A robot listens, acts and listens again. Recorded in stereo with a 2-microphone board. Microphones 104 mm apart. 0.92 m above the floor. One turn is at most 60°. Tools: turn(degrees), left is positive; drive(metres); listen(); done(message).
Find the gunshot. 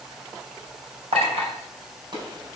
turn(degrees=-50)
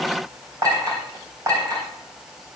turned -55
listen()
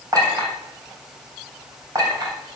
done("I heard a gunshot, but can't make it out now. It was about 5° left or 75° right.")